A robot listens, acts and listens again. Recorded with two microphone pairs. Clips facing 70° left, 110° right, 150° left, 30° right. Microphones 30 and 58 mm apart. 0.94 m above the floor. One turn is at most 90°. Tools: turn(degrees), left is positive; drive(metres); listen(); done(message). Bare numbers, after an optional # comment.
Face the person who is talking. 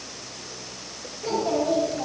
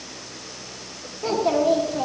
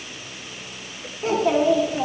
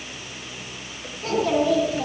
# The child speaking: 145° right.
turn(-90)
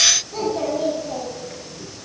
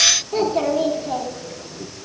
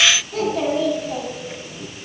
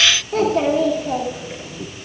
# The child speaking is now 60° right.
turn(-60)
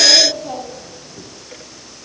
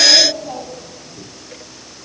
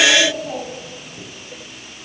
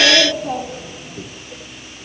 done("Facing the child speaking.")